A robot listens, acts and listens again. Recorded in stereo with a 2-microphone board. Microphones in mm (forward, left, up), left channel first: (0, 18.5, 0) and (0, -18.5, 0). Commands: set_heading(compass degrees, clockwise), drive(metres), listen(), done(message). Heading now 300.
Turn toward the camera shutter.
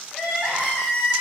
listen()
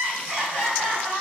listen()
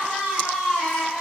done("I can't make out a camera shutter, only crying.")